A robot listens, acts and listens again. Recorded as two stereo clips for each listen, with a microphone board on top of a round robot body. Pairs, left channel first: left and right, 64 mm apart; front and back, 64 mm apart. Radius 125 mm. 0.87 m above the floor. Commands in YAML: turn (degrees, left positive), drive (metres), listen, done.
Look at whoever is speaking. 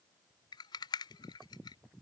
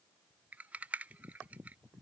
listen: true
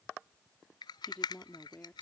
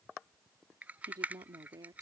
turn: 155
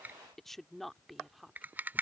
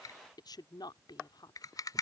done: "Facing the woman speaking."